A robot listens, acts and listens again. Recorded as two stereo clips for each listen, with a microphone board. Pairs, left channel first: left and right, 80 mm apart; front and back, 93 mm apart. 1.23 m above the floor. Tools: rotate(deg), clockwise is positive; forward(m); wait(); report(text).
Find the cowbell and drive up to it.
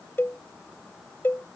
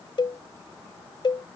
rotate(-30)
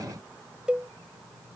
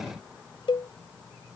rotate(15)
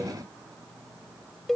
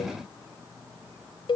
forward(1.0)
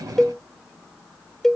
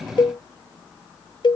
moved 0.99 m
forward(1.0)
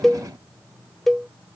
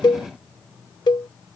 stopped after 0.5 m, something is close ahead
report("Arrived at the cowbell, straight ahead.")